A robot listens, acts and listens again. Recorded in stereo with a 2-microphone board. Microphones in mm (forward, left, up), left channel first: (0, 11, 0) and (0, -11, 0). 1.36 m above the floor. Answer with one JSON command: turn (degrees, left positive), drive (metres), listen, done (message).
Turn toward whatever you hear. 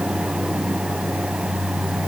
{"listen": true}
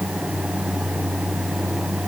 {"listen": true}
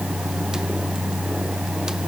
{"done": "I can't make out anything to turn to."}